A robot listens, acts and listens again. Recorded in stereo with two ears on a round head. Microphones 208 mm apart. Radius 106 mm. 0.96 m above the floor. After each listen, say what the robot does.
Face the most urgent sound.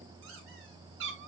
Keep listening.
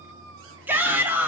Turn 30° right.
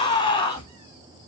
Turn 20° left.
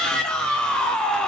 Found it: a shout, straight ahead, 1 to 2 m away.